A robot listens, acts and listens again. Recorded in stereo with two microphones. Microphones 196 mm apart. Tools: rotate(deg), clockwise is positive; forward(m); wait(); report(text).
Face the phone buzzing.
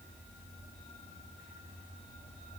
wait()
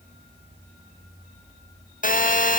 rotate(-45)
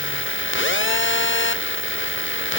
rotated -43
rotate(-90)
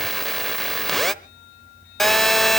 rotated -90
report("Found it: a phone buzzing, straight ahead.")